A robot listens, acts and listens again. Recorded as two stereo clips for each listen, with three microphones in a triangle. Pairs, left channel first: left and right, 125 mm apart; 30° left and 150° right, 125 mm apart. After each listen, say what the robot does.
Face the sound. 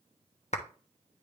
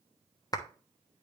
Turn 85° left.
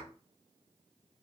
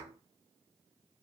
Keep listening.
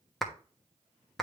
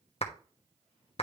Facing the clap.